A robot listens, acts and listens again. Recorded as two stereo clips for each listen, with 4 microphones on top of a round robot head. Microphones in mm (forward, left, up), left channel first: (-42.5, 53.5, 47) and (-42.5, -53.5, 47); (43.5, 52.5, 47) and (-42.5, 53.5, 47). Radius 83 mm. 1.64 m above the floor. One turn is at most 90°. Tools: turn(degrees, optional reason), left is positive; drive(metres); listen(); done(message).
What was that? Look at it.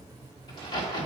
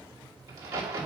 turn(degrees=90, reason="The crack: 125° left.")
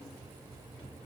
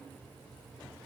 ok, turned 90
turn(degrees=35, reason="Nothing new. It was at 35° left.")
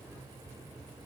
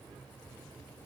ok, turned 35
done("I heard a crack from this way, but can't make it out now.")